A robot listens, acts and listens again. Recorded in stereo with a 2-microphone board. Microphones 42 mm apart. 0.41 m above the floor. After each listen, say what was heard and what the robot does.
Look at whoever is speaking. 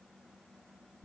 Keep listening.
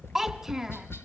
Turn 30° right.
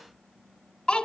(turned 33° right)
So it is at 25° left. Turn 25° left.
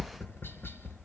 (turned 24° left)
Keep listening.
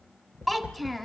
Facing the child speaking.